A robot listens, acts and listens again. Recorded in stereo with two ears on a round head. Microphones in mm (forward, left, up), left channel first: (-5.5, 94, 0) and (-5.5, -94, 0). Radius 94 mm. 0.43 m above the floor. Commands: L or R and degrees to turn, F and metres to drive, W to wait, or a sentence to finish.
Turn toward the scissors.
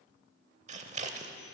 R35
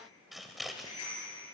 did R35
Found it: scissors, straight ahead.